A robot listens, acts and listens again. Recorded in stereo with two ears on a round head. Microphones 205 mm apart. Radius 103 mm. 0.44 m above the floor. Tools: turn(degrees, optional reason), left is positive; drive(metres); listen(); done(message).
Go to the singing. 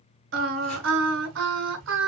turn(degrees=-55, reason="The singing: about 55° right or 125° right.")
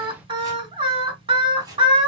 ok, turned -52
turn(degrees=-30, reason="So it is at 30° right.")
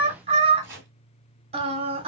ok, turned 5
turn(degrees=-35, reason="The singing is now 35° right.")
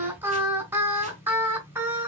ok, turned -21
turn(degrees=-10, reason="The singing is now 10° right.")
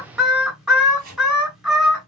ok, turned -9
drive(metres=1.0)
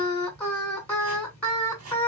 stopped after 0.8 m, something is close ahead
turn(degrees=10, reason="The singing is now 10° left.")
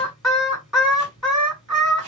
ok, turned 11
done("I am next to the singing.")